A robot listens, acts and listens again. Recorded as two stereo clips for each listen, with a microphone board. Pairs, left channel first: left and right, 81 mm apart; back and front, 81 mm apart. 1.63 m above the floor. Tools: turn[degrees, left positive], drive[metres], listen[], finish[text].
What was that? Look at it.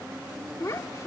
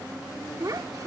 Thought: The child speaking: 45° left.
Action: turn[45]
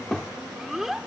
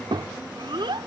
Action: finish[Found it: a child speaking, straight ahead.]